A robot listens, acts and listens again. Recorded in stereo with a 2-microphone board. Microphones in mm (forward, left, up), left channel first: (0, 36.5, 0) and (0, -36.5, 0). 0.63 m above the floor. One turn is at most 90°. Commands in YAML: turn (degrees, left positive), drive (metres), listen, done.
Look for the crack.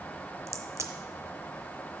turn: -40
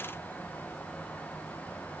listen: true
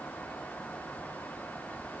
done: "I heard a crack, but can't make it out now. It was about straight ahead or 100° right."